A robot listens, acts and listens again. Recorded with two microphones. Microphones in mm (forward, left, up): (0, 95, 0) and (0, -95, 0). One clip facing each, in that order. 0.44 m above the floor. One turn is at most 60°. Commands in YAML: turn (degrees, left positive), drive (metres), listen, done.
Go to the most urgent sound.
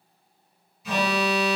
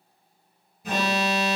turn: -50
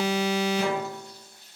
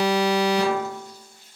turn: -60
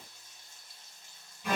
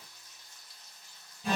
turn: -30
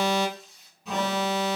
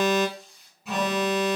drive: 1.0
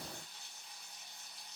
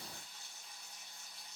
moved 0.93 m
listen: true
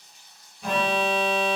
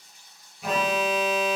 drive: 1.0
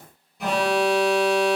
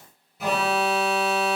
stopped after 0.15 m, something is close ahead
done: "I am next to the alarm."